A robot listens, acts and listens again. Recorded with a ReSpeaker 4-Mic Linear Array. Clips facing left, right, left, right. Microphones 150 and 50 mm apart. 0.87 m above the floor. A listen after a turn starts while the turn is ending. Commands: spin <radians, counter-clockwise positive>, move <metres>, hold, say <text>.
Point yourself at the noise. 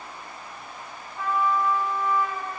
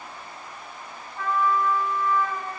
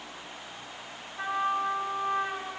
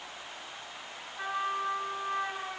spin 0.35
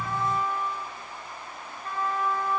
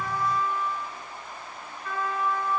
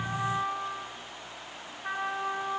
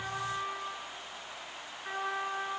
spin 2.44
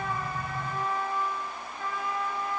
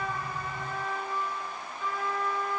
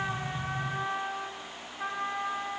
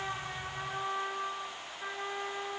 spin 1.13
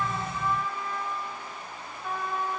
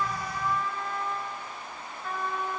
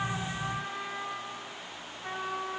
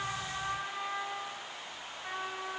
say Found it: a trumpet, straight ahead, 2 to 4 m away.